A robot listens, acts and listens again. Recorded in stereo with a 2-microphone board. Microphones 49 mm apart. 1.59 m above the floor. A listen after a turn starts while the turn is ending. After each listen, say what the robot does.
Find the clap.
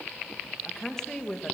Keep listening.
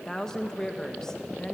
Keep listening.
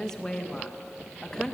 I can't make out a clap, only a woman speaking.